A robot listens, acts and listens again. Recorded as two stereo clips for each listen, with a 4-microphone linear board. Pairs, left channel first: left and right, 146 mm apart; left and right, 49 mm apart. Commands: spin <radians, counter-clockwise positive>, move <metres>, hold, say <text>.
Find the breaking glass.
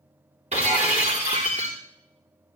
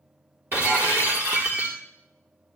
spin -0.87
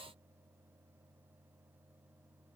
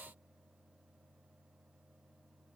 hold
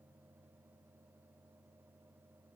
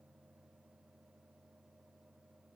say I heard breaking glass, but can't make it out now. It was about straight ahead or 80° right.